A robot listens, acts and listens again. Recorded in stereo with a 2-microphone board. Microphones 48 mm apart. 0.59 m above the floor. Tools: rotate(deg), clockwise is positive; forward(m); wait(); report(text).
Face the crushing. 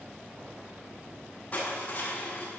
rotate(-35)
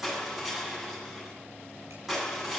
report("Found it: crushing, straight ahead, over 4 m away.")